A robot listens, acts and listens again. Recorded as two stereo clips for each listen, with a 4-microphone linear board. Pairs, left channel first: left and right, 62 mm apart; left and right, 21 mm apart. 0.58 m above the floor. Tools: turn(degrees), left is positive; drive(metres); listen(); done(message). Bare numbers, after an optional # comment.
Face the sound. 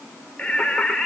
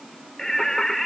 turn(30)
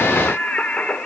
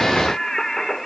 turn(30)
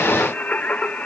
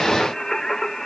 # The singing: about 20° left or 160° left.
turn(20)
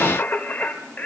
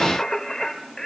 # So it is at 155° left.
turn(155)
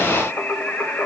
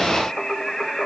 # The singing is now 30° left.
turn(30)
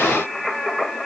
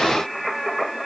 done("Facing the singing, 2 to 4 m away.")